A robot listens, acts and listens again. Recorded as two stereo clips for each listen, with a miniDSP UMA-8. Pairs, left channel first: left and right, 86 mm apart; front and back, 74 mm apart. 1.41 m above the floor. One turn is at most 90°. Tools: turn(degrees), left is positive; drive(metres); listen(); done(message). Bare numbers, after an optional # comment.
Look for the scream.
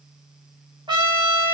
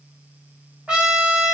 listen()
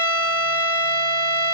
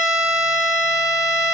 listen()
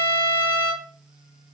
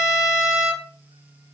done("I can't make out a scream to turn to.")